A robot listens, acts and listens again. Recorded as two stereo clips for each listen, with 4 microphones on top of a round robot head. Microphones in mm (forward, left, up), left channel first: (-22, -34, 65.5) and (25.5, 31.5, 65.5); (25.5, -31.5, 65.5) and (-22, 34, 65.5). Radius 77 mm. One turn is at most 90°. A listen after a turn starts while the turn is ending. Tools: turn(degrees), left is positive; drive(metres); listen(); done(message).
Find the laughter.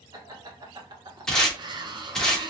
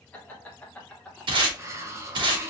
turn(degrees=25)
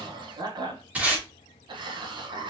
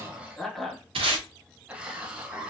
turn(degrees=55)
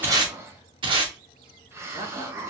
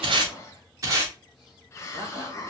turn(degrees=45)
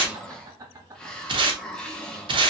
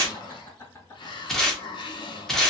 done("Facing the laughter.")